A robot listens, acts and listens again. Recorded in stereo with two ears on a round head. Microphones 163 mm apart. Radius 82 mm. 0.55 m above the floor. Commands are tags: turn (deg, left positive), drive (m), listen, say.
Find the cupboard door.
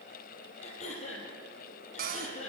<turn deg="-50"/>
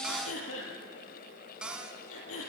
<say>Found it: a cupboard door, straight ahead, 2 to 4 m away.</say>